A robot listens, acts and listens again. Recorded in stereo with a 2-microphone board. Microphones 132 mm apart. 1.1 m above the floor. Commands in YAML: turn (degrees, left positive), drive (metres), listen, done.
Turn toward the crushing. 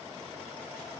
listen: true
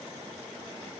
listen: true
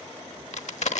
turn: 70
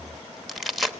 done: "Facing the crushing, 1 to 2 m away."